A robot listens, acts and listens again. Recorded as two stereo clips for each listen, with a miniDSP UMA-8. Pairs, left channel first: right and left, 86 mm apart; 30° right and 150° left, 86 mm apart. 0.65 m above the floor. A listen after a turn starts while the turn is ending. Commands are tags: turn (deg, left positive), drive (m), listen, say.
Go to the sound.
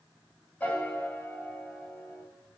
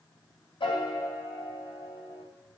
<turn deg="-20"/>
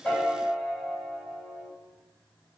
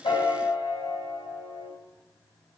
<drive m="1.0"/>
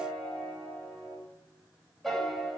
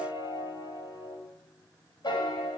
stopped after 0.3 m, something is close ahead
<say>Something is in my way. I am facing the piano but have not reached it.</say>